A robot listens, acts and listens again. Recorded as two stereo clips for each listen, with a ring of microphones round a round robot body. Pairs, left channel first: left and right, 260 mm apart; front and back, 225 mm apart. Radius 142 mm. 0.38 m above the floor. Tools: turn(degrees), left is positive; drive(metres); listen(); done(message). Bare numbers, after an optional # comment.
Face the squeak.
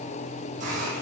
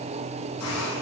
listen()
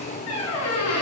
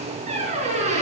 # The squeak: 120° left.
turn(120)
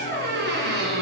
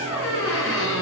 # The squeak is now 40° right.
turn(-40)
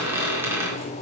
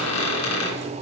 # The squeak is now 10° right.
turn(-10)
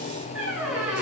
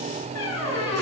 done("Found it: a squeak, straight ahead.")